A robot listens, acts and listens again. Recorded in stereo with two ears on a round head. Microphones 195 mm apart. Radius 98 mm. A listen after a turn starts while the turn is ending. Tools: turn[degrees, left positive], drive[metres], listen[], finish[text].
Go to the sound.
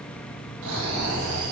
Action: turn[-90]
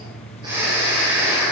Thought: So it is at 10° right.
Action: turn[-10]
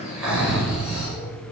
Action: drive[1.0]
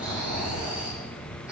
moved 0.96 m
Action: drive[1.0]
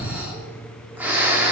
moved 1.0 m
Thought: The snoring is now 10° right.
Action: turn[-10]
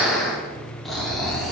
Action: drive[1.0]
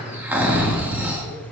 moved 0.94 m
Thought: The snoring is now 10° right.
Action: turn[-10]
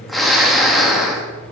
Action: drive[1.0]
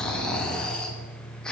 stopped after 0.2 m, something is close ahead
Action: finish[I am next to the snoring.]